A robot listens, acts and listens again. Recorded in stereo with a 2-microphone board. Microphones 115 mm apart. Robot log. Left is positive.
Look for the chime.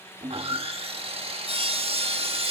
cmd idle
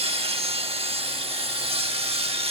cmd idle
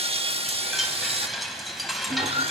cmd yaw +30
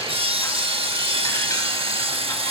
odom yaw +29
cmd idle
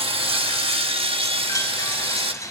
note: So it is at 150° left.
cmd yaw +150
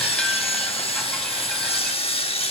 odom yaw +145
cmd idle
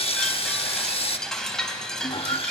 end: Found it: a chime, straight ahead.